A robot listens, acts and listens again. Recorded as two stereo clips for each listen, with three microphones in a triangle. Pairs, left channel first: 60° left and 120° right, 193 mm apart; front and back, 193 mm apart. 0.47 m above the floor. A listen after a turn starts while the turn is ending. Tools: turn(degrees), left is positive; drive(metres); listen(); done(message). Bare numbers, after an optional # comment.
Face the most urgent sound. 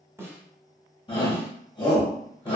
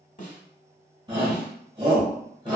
# The shout: 120° left.
turn(120)
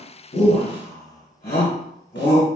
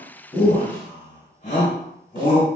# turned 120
# The shout is now 40° left.
turn(40)
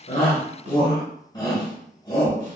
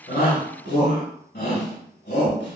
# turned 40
done("Found it: a shout, straight ahead.")